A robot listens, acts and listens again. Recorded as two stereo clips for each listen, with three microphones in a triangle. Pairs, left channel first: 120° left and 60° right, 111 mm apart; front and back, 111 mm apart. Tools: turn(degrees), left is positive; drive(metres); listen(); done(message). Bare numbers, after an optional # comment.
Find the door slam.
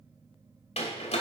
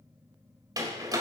# The door slam: 125° left.
turn(125)
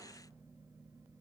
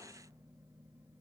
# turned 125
done("Facing where the door slam came from. I can't hear it now.")